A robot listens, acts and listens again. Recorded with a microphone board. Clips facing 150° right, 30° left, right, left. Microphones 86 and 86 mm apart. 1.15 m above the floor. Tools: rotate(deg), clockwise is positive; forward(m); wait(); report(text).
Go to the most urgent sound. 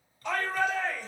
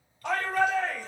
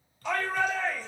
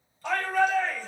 rotate(-50)
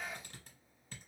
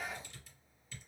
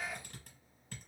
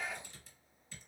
wait()
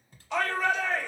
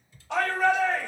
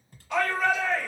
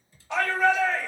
rotate(-30)
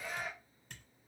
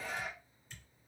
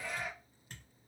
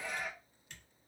rotate(-10)
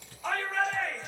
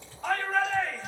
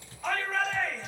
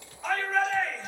forward(1.0)
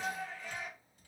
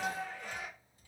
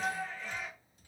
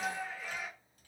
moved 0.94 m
rotate(-10)
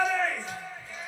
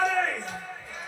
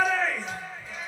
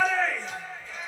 forward(1.0)
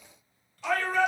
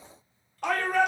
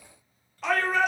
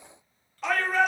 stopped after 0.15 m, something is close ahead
report("Arrived at the shout, straight ahead.")